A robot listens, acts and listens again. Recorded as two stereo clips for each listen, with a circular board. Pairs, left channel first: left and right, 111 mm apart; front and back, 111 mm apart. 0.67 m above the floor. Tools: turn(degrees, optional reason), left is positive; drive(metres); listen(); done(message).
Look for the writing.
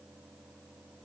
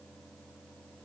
listen()
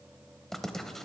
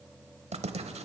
turn(degrees=175, reason="The writing: 175° left.")
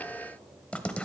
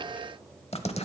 turn(degrees=10, reason="The writing is now 10° left.")
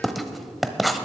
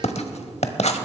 done("Facing the writing, under 1 m away.")